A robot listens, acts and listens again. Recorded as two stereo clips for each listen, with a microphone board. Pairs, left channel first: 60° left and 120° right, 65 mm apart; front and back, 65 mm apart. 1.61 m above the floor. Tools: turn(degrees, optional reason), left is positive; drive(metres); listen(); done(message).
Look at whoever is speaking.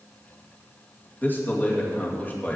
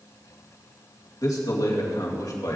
done("Found it: a man speaking, straight ahead.")